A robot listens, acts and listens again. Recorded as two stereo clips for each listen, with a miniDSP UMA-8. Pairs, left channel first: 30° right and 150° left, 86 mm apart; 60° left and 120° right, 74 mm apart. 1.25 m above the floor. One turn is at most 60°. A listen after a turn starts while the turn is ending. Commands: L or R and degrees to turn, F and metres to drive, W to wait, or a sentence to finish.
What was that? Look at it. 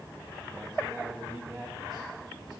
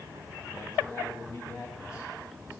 L60
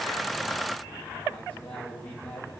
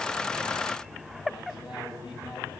L45
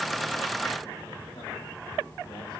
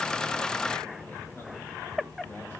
W
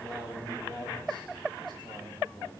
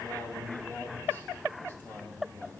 Facing the man speaking, over 4 m away.